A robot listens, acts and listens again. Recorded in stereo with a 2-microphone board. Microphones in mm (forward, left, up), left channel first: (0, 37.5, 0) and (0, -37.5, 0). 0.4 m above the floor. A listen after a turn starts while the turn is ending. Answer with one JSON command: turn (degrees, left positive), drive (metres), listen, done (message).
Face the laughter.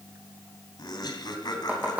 {"turn": 70}
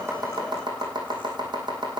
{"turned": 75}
{"listen": true}
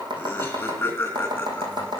{"turn": 25}
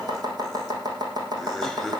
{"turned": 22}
{"done": "Facing the laughter."}